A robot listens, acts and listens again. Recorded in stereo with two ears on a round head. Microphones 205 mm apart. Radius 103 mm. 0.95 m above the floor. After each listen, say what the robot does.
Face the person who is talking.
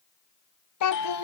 Turn 90° left.
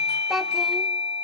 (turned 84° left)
Facing the child speaking.